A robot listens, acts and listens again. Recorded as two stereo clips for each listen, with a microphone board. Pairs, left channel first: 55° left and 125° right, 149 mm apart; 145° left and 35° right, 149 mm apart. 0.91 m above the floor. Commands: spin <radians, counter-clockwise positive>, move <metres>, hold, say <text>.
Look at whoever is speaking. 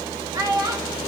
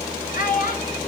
spin 2.97
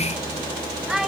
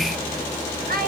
spin -0.70
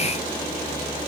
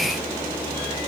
hold
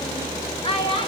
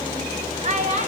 say Found it: a child speaking, straight ahead, 1 to 2 m away.